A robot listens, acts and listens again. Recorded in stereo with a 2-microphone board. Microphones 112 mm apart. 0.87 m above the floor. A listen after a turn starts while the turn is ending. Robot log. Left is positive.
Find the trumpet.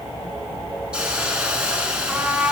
cmd yaw -30
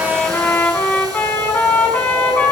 note: So it is at 15° left.
cmd yaw +15
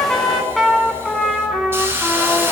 end: Found it: a trumpet, straight ahead.